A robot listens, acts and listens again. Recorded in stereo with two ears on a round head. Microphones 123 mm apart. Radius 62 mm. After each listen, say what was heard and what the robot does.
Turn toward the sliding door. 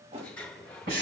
Turn 30° left.
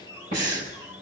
So it is at 20° right. Turn 20° right.
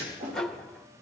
Facing the sliding door, 1 to 2 m away.